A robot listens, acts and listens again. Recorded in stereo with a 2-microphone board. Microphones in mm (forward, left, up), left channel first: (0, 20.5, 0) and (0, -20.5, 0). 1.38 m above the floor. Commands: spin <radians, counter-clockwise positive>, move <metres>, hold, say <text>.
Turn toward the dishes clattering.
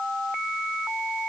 hold
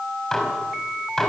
spin 0.52
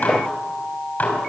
spin 2.44
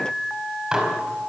spin -0.35
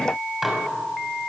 say Found it: dishes clattering, straight ahead.